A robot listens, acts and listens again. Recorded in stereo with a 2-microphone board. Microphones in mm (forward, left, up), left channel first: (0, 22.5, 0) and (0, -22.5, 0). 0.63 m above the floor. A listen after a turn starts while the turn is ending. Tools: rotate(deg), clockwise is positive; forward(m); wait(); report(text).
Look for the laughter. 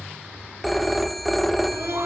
rotate(65)
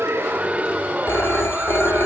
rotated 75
rotate(40)
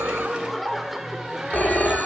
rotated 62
rotate(10)
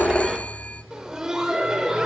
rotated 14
rotate(15)
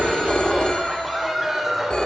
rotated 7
report("Facing the laughter, 2 to 4 m away.")